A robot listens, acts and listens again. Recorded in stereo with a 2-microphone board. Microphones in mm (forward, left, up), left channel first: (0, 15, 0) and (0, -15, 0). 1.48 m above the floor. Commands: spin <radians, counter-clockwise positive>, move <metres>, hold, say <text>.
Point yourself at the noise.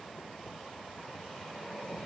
hold
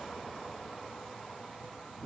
hold
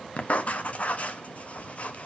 spin 0.87
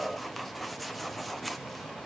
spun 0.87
say Facing the writing.